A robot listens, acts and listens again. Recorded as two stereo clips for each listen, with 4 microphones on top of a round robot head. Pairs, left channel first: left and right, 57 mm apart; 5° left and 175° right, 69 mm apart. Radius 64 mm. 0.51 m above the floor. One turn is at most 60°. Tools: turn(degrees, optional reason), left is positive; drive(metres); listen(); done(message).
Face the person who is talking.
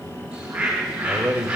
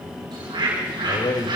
turn(degrees=-20, reason="The man speaking: 20° right.")
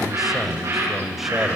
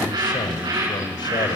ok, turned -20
done("Found it: a man speaking, straight ahead.")